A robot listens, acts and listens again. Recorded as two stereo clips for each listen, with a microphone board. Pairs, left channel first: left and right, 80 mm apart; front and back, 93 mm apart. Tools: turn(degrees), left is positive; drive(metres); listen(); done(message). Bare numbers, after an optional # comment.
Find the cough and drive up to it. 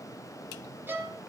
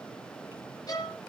listen()
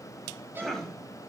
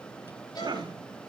# The cough: 175° left.
turn(175)
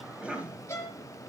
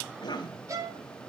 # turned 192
# The cough is now 20° right.
turn(-20)
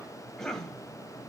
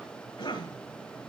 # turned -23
drive(1.0)
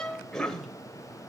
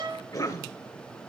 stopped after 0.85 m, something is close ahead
# The cough is now 10° left.
turn(10)
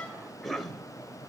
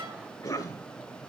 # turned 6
done("Arrived at the cough, straight ahead.")